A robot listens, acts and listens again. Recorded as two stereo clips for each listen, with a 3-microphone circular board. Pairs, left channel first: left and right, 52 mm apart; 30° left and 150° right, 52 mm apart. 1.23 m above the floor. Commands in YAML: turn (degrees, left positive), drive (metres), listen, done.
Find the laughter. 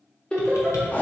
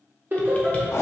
turn: 155
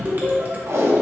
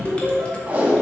turn: -15
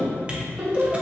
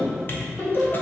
turn: -15
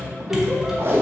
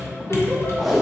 listen: true
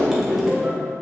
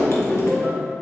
turn: -15
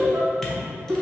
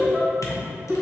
done: "Facing the laughter, 2 to 4 m away."